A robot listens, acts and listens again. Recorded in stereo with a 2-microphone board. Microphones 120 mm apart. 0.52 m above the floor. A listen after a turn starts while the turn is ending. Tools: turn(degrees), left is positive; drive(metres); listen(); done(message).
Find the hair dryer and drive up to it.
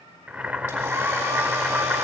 turn(degrees=-15)
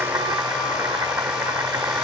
drive(metres=1.0)
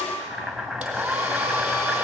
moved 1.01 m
turn(degrees=-10)
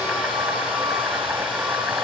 drive(metres=1.0)
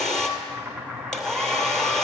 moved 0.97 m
drive(metres=1.0)
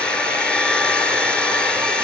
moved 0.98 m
turn(degrees=10)
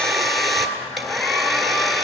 drive(metres=1.0)
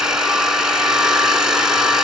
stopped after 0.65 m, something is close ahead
done("Arrived at the hair dryer, straight ahead.")